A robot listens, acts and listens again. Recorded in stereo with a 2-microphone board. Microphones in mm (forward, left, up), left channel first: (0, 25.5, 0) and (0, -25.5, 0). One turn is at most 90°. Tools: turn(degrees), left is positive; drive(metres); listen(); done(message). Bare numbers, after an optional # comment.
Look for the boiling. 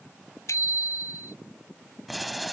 turn(-30)
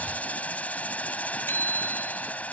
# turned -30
# So it is at 25° left.
turn(25)
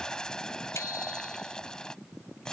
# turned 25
# The boiling is now 10° left.
turn(10)
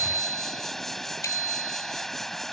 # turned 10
done("Facing the boiling.")